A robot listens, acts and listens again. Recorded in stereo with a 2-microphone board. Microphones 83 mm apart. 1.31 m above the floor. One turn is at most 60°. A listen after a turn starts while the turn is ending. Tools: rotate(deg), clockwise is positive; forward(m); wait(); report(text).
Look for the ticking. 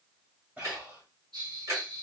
rotate(45)
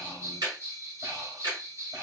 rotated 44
rotate(60)
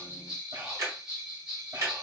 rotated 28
rotate(55)
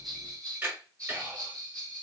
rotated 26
rotate(30)
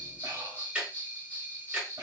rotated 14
rotate(15)
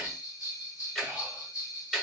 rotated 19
report("Found it: ticking, straight ahead.")